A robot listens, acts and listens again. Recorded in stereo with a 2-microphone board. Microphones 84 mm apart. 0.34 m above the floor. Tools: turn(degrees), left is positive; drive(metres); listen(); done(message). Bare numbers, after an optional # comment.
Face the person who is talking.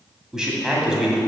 turn(-30)
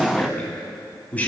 # So it is at 20° left.
turn(20)
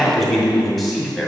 done("Facing the man speaking, 2 to 4 m away.")